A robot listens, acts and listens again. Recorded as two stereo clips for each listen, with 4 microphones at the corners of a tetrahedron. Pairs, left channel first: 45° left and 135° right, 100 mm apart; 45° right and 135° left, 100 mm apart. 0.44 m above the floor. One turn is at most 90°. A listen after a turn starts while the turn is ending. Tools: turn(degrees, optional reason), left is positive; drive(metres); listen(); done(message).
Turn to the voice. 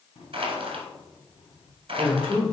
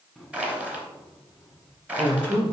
turn(degrees=90, reason="The man speaking: 135° left.")
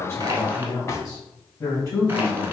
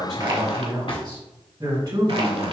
turn(degrees=90, reason="The man speaking is now 95° left.")
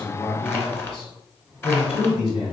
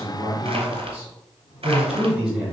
turn(degrees=55, reason="The man speaking is now 55° left.")
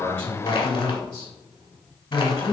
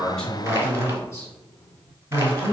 turn(degrees=15, reason="The man speaking is now 15° left.")
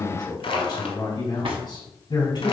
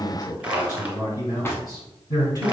done("Found it: a man speaking, straight ahead, 2 to 4 m away.")